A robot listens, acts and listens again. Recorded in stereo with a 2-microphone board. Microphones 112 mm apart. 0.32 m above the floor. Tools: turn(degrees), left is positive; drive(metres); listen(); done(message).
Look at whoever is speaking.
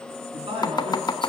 turn(degrees=-55)
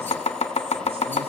listen()
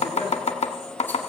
listen()
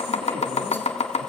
done("I heard a man speaking, but can't make it out now. It was about straight ahead or 70° right.")